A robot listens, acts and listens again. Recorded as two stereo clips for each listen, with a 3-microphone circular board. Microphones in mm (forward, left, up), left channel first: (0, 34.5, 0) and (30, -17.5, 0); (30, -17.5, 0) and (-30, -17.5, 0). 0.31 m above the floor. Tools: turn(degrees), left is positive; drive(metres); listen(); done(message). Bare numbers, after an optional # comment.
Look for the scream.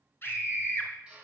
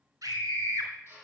# The scream: 165° left.
turn(165)
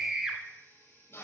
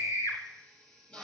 # The scream is now 15° left.
turn(15)
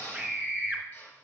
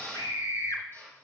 done("Facing the scream.")